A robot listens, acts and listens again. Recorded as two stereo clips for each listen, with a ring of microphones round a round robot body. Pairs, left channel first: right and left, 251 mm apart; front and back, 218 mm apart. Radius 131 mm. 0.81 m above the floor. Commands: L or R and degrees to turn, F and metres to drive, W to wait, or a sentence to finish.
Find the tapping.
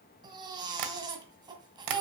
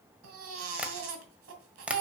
L95
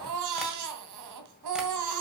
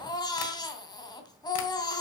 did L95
W
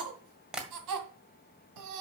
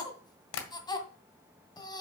Facing the tapping.